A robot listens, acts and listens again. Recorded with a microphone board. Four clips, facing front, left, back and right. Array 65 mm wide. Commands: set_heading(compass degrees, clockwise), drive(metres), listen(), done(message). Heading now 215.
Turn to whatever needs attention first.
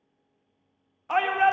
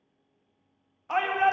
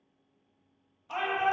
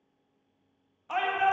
set_heading(195)
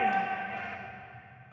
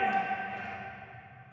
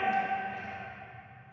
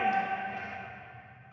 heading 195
done("Found it: a shout, straight ahead, 1 to 2 m away.")